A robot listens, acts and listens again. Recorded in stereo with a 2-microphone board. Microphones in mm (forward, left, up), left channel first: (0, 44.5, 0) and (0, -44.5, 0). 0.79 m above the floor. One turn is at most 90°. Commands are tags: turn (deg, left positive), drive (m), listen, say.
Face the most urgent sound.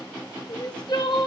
<turn deg="55"/>
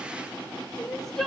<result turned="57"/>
<say>Facing the crying.</say>